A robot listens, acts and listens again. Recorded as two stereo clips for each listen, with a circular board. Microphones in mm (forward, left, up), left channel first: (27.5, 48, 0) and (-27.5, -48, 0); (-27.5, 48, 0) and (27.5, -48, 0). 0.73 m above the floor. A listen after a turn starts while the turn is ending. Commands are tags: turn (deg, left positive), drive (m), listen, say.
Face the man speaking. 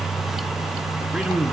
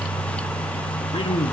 <turn deg="160"/>
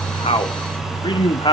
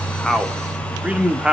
<turn deg="25"/>
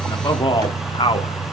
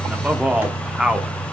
<turn deg="25"/>
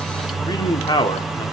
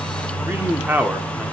<turn deg="15"/>
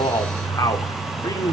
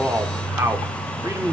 <say>Found it: a man speaking, straight ahead, 1 to 2 m away.</say>